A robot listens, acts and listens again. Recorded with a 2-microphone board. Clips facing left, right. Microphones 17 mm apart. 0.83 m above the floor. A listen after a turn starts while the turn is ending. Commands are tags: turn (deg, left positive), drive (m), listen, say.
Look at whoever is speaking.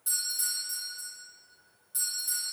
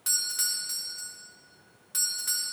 <listen/>
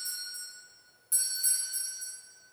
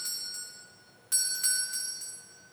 <listen/>
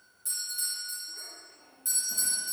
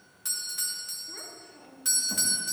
<turn deg="-50"/>
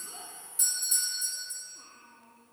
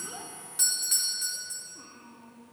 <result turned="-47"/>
<turn deg="-10"/>
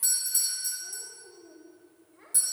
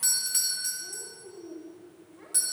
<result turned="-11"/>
<say>Found it: a child speaking, straight ahead.</say>